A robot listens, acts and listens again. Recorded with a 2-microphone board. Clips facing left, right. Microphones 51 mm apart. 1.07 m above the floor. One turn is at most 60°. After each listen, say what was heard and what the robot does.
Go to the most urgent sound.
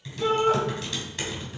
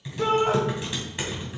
The shout: about 50° right or 130° right. Turn 50° right.
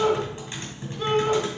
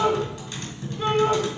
So it is at 10° right. Turn 10° right.
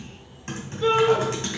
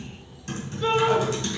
Drive 1.0 m forward.
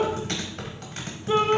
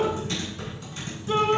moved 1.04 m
The shout is now 20° left. Turn 20° left.
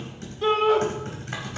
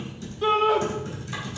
Drive 1.0 m forward.
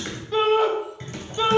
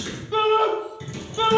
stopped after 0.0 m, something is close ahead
I am next to the shout.